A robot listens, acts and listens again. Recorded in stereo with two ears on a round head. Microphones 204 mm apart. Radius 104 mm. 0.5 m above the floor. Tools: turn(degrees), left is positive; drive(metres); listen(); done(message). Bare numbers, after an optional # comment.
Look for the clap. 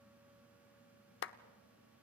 # The clap: about 55° left or 125° left.
turn(55)
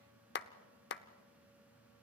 # So it is at 55° left.
turn(55)
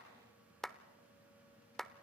done("Found it: a clap, straight ahead, under 1 m away.")